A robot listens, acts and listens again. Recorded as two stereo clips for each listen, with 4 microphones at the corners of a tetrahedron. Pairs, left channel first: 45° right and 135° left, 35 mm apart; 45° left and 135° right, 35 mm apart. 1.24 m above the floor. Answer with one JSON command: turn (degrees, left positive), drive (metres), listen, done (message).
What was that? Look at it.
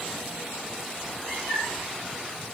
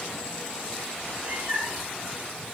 {"turn": -115}
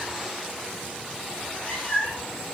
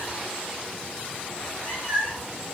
{"turn": -10}
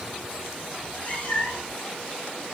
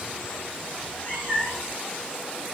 {"done": "Found it: a cat meowing, straight ahead."}